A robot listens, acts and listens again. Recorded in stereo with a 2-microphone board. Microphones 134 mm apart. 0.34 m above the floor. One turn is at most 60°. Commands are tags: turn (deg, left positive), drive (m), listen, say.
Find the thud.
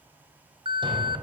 <turn deg="-35"/>
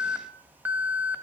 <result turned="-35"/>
<listen/>
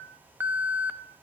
<say>I heard a thud, but can't make it out now. It was about straight ahead or 110° right.</say>